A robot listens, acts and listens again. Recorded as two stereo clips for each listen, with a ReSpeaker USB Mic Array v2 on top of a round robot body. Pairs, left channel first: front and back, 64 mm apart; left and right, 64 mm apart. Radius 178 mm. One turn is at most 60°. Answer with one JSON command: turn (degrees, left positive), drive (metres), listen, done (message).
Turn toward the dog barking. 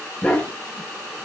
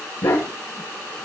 {"turn": 60}
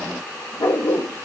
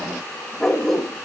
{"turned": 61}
{"turn": 10}
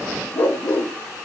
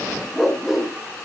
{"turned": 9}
{"done": "Found it: a dog barking, straight ahead, 1 to 2 m away."}